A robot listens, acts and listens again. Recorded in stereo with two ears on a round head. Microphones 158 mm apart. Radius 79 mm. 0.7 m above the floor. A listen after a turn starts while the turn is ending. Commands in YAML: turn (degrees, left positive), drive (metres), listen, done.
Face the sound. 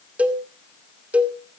turn: -30
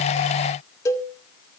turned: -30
turn: 20
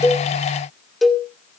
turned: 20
done: "Facing the cowbell, 2 to 4 m away."